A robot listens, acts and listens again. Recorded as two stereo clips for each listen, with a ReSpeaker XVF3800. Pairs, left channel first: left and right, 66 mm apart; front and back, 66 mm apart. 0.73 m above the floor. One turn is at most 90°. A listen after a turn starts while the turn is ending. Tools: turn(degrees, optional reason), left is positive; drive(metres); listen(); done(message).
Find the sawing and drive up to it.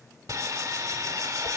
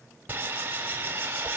turn(degrees=-90, reason="The sawing: 120° right.")
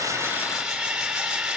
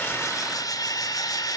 turn(degrees=-10, reason="The sawing is now 10° right.")
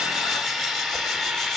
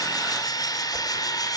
drive(metres=1.0)
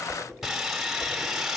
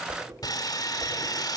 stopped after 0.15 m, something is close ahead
done("Something is in my way. I am facing the sawing but have not reached it.")